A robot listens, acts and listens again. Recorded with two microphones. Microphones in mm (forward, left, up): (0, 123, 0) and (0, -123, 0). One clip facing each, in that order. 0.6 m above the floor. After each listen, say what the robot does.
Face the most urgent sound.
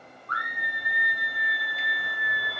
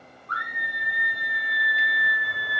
Turn 30° right.
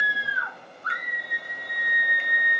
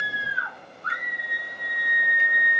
Turn 110° right.
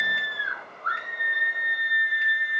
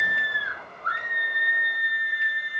Turn 40° right.
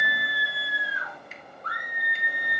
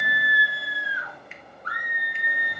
Turn 15° right.
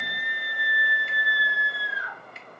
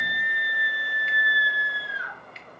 Found it: a scream, straight ahead, 1 to 2 m away.